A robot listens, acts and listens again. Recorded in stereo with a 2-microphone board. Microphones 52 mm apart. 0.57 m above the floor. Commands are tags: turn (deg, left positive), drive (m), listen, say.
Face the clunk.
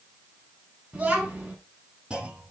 <turn deg="-20"/>
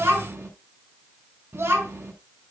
<listen/>
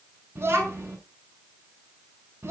<say>I heard a clunk, but can't make it out now. It was about straight ahead or 140° right.</say>